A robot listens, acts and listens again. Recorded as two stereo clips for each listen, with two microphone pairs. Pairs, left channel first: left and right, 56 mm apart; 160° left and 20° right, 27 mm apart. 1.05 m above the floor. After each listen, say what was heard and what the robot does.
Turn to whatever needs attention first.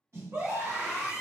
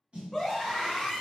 The scream: 100° right. Turn 100° right.
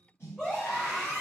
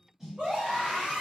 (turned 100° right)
The scream is now 20° left. Turn 20° left.
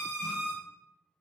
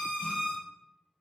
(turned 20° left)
Found it: a scream, straight ahead, 1 to 2 m away.